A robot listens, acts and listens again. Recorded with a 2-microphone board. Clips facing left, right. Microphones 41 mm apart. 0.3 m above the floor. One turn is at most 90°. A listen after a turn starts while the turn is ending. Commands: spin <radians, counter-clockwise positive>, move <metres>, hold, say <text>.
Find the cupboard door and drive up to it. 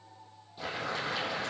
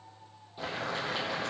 hold
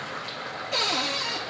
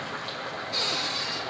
spin 1.57
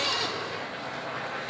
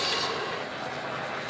spin 0.17
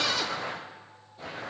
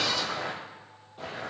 hold
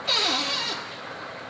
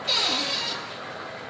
move 1.0
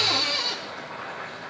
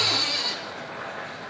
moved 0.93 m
move 1.0
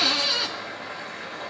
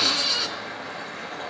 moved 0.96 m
spin 0.17
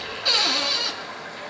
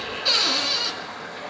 move 1.0
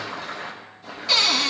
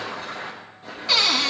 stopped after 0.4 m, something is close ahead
say Arrived at the cupboard door, straight ahead.